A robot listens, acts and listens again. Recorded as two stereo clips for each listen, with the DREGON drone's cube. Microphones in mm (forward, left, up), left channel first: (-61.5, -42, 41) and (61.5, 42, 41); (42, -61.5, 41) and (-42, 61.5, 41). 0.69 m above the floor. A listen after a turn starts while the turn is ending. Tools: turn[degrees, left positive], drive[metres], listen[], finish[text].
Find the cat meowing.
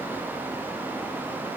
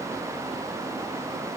Action: listen[]
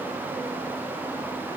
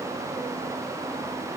Action: listen[]
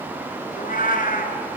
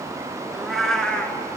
Thought: The cat meowing: 140° right.
Action: turn[-140]
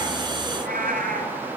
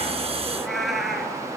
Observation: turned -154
Thought: The cat meowing is now 35° left.
Action: turn[35]
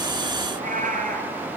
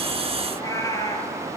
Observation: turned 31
Thought: The cat meowing is now 10° left.
Action: turn[10]
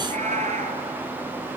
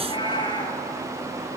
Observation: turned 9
Action: finish[Found it: a cat meowing, straight ahead.]